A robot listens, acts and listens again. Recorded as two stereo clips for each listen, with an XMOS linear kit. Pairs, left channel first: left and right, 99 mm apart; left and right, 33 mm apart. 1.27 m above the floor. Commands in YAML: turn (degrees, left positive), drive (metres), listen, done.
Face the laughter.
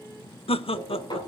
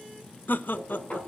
turn: 70
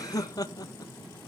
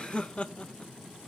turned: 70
turn: 40
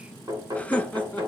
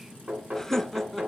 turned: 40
turn: 15
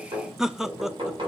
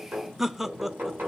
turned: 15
done: "Facing the laughter, 1 to 2 m away."